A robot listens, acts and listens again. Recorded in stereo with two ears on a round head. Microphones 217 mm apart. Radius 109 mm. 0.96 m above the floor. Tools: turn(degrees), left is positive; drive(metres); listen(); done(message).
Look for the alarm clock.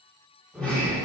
listen()
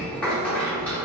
listen()
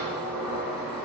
done("I can't make out an alarm clock, only a sliding door.")